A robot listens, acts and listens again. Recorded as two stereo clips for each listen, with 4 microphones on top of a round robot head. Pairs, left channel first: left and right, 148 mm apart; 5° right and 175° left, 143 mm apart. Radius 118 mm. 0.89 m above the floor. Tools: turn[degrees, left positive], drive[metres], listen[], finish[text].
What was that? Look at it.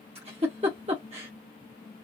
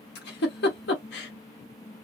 Thought: The giggle: 25° right.
Action: turn[-25]
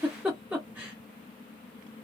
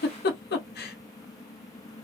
Action: finish[Found it: a giggle, straight ahead, under 1 m away.]